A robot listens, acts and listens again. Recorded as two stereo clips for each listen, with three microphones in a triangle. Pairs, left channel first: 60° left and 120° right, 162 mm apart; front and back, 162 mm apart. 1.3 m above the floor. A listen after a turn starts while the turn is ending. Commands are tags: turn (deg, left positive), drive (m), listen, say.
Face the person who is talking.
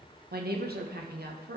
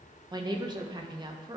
<turn deg="-120"/>
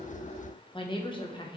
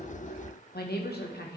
<say>Facing the woman speaking.</say>